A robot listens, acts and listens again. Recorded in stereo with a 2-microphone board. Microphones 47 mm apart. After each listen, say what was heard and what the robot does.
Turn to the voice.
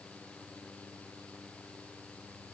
Keep listening.
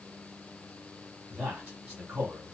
The man speaking: about 15° right or 165° right. Turn 15° right.
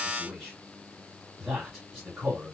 Facing the man speaking.